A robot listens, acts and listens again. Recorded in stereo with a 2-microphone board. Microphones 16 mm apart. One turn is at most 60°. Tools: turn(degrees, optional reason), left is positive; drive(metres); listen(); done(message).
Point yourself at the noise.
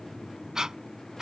turn(degrees=-45, reason="The breathing: about 45° right or 135° right.")
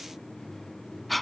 done("Found it: breathing, straight ahead.")